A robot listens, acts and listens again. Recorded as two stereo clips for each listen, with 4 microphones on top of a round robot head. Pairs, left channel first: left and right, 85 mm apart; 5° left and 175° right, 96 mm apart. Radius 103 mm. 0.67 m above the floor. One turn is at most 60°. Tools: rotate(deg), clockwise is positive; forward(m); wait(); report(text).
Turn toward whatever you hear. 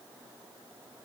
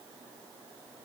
wait()
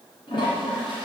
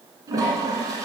rotate(-60)
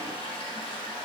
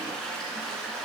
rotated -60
rotate(-60)
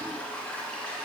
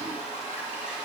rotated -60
rotate(-10)
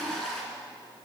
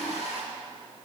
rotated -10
report("Facing the toilet flushing, 1 to 2 m away.")